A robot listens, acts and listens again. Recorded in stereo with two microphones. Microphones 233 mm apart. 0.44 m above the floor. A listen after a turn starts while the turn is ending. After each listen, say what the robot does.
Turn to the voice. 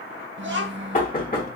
Turn 55° right.
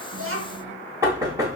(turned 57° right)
Keep listening.
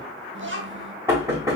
Turn 65° right.
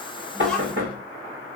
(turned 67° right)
Found it: a child speaking, straight ahead.